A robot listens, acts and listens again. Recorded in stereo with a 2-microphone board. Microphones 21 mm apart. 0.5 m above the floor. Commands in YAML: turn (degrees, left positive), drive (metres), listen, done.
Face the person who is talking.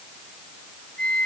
listen: true
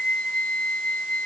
listen: true
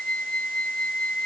done: "I can't make out anyone speaking, only a flute."